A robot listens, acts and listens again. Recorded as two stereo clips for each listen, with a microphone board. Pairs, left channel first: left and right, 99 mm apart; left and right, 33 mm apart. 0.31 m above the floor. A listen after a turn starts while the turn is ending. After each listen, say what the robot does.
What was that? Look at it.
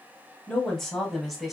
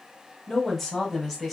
Turn 30° left.
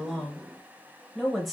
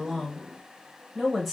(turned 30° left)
Turn 30° left.
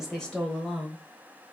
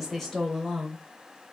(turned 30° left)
Turn 30° left.
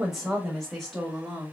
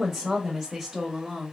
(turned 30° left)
Turn 30° right.
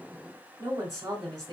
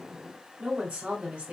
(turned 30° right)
Turn 145° right.
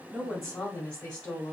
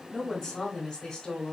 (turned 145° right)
Turn 15° left.
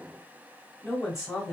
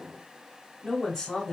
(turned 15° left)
Found it: a woman speaking, straight ahead, 1 to 2 m away.